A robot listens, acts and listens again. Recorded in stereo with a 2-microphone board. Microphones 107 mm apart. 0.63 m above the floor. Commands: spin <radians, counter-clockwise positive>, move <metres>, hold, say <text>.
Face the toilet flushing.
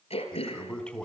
spin 0.52
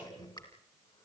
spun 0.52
spin 2.44
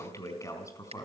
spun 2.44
spin 0.52
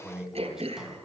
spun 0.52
say Found it: a toilet flushing, straight ahead.